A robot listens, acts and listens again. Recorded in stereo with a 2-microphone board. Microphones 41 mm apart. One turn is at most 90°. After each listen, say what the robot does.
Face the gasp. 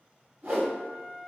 Keep listening.
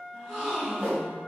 Turn 30° right.
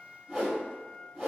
Keep listening.
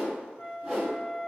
I heard a gasp, but can't make it out now. It was about 20° left or 140° right.